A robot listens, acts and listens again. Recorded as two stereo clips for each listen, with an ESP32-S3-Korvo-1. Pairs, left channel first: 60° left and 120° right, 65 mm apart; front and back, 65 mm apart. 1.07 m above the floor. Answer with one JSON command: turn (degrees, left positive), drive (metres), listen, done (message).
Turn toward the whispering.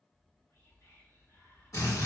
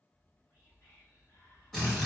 {"turn": 35}
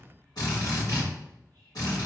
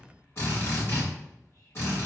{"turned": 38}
{"done": "Facing the whispering, 1 to 2 m away."}